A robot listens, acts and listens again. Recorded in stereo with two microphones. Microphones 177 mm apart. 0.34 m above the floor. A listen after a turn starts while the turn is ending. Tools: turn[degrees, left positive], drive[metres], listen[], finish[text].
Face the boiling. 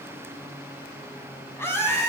Action: listen[]
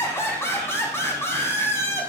Action: listen[]
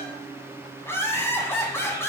Action: finish[I can't make out boiling to turn to.]